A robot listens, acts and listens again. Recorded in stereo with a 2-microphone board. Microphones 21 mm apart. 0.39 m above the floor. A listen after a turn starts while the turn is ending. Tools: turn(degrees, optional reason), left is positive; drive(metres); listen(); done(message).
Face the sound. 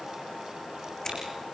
turn(degrees=30, reason="The scissors: about 30° left or 150° left.")
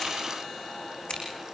turn(degrees=115, reason="So it is at 115° left.")
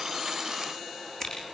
turn(degrees=25, reason="The scissors is now 25° left.")
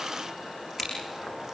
done("Facing the scissors, over 4 m away.")